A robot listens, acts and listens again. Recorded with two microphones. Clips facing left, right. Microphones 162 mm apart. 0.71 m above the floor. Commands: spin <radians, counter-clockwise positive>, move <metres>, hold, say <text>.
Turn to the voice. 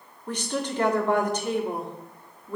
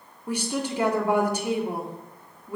spin -0.52
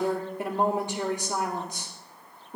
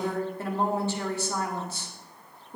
spin 0.26
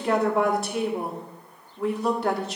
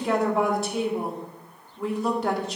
say Facing the woman speaking.